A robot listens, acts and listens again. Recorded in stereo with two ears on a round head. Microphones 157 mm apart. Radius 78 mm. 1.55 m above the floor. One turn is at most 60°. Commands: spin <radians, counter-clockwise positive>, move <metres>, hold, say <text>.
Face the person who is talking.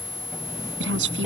spin -1.05
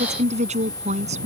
spin -0.70
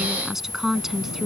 say Found it: a woman speaking, straight ahead.